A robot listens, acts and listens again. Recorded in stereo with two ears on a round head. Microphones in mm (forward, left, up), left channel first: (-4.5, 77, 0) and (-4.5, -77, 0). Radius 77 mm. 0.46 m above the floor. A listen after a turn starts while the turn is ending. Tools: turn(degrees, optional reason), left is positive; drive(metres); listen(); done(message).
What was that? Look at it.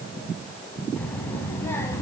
turn(degrees=15, reason="The child speaking: about 15° left or 165° left.")
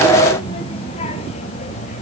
turn(degrees=140, reason="So it is at 140° left.")
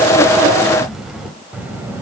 turn(degrees=-15, reason="The child speaking is now 15° right.")
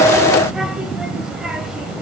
done("Facing the child speaking.")